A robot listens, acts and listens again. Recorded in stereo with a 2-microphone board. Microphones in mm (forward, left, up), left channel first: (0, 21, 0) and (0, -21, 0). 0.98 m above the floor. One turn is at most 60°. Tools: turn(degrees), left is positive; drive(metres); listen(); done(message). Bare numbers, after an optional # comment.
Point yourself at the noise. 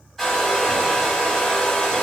turn(30)
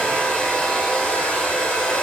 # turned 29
# So it is at 145° left.
turn(60)
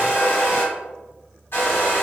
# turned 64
# The hair dryer is now 80° left.
turn(60)
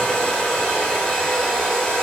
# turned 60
# The hair dryer is now 20° left.
turn(20)
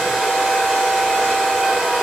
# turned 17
done("Facing the hair dryer, 1 to 2 m away.")